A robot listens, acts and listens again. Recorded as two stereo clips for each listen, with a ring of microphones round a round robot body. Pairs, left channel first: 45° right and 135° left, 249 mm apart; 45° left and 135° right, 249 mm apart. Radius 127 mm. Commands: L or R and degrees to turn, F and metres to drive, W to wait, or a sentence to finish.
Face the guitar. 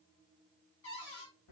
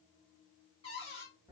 W
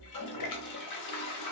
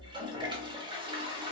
W
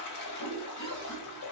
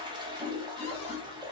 I can't make out a guitar to turn to.